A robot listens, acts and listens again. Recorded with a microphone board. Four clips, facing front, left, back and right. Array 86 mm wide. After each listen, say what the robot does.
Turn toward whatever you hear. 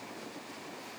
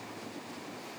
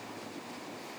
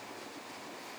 Keep listening.
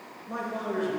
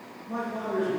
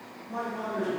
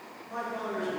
Found it: a man speaking, straight ahead.